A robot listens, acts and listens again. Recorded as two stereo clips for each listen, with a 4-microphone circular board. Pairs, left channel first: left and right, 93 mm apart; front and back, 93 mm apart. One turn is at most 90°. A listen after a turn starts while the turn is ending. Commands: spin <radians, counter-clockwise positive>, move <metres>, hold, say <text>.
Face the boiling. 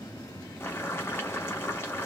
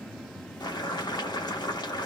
spin 0.52
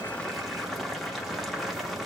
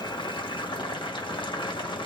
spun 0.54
say Found it: boiling, straight ahead.